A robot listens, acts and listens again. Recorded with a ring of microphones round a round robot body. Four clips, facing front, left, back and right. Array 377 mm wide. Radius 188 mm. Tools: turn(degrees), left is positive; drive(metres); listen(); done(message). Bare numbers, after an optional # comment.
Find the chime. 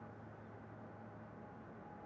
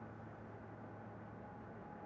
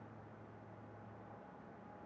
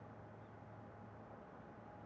listen()
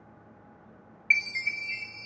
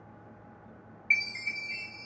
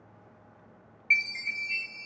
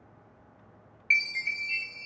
# The chime: 50° right.
turn(-50)
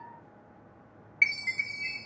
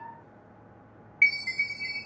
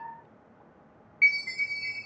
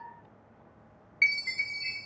# The chime is now 15° right.
turn(-15)
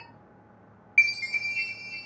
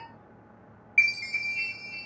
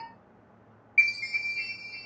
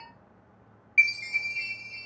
done("Facing the chime.")